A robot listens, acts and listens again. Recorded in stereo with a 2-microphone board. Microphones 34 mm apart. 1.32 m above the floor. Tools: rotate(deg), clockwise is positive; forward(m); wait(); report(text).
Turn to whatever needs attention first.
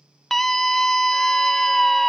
rotate(-30)
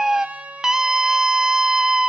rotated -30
rotate(15)
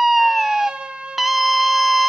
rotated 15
report("Facing the scream, under 1 m away.")